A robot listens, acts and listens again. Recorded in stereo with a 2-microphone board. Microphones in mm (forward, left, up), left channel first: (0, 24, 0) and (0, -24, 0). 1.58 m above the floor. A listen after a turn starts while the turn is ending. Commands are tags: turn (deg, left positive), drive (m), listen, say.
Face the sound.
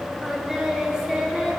<turn deg="-30"/>
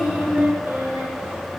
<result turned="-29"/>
<turn deg="-135"/>
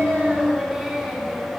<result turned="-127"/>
<say>Facing the singing.</say>